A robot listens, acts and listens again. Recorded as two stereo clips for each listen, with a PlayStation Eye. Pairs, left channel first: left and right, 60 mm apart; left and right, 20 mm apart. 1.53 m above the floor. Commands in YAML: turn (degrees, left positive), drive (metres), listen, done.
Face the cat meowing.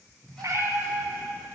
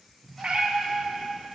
turn: -65
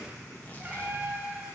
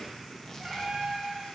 turn: -30
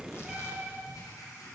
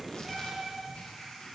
turn: -15
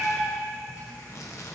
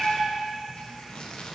done: "Found it: a cat meowing, straight ahead."